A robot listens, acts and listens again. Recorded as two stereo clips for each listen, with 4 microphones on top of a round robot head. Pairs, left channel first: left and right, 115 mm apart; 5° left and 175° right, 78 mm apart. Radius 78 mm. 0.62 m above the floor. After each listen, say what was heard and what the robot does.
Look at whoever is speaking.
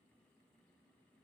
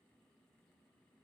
Keep listening.
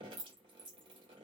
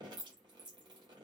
Keep listening.
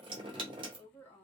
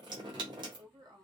The woman speaking: 165° left. Turn 165° left.
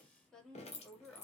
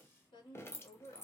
Facing the woman speaking, 1 to 2 m away.